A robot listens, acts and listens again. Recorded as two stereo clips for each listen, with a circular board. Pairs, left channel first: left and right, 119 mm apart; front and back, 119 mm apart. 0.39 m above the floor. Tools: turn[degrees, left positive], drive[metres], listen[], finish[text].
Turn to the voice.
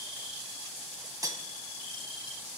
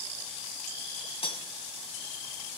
Action: listen[]
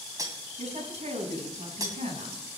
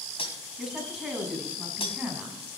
Thought: The woman speaking: 100° right.
Action: turn[-100]
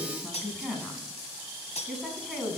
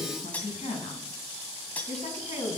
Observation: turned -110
Action: finish[Facing the woman speaking.]